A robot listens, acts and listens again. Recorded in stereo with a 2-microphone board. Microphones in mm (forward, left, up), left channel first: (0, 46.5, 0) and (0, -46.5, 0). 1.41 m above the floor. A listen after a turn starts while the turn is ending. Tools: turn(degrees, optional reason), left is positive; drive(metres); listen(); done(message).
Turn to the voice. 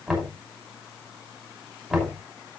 listen()
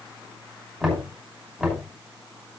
listen()
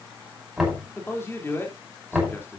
turn(degrees=25, reason="The man speaking: about 25° left or 155° left.")
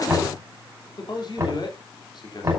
turn(degrees=130, reason="So it is at 130° left.")
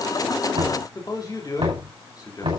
turn(degrees=40, reason="The man speaking is now 40° left.")
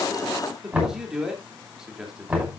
done("Facing the man speaking.")